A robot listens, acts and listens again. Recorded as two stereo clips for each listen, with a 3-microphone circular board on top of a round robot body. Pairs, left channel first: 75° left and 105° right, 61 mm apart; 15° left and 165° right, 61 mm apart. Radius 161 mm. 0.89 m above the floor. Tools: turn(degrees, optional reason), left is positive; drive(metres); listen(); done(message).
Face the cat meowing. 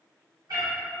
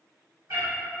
turn(degrees=-130, reason="The cat meowing: 130° right.")
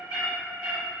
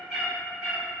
turn(degrees=-85, reason="The cat meowing is now 85° right.")
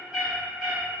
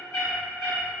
turn(degrees=-15, reason="The cat meowing is now 15° right.")
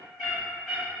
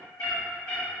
turn(degrees=-25, reason="The cat meowing is now 25° right.")
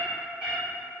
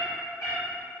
turn(degrees=-25, reason="The cat meowing is now 25° right.")
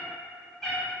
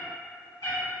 done("Facing the cat meowing, 1 to 2 m away.")